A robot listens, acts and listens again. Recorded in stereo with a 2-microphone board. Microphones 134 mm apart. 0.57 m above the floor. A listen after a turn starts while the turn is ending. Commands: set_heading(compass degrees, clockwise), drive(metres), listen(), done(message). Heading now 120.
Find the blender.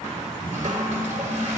listen()
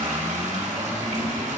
listen()
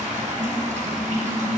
done("I can't make out a blender, only a toilet flushing.")